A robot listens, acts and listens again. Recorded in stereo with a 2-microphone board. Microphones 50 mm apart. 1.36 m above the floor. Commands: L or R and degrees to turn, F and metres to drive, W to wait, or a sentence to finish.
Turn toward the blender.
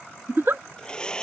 L15
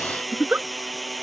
Found it: a blender, straight ahead.